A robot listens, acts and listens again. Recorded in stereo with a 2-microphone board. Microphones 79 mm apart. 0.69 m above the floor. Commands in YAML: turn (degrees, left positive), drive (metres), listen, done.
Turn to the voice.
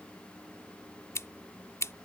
listen: true
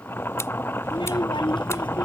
turn: 90
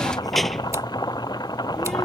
done: "Found it: a child speaking, straight ahead."